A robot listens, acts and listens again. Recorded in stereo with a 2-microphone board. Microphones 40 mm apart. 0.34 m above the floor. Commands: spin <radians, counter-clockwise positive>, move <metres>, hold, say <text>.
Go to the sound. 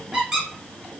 spin -0.52
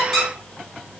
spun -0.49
spin 0.26
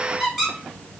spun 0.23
move 1.0
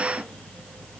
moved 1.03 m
hold
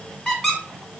spin 0.26
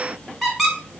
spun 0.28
move 1.0
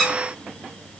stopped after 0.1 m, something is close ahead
say Arrived at the squeak, straight ahead.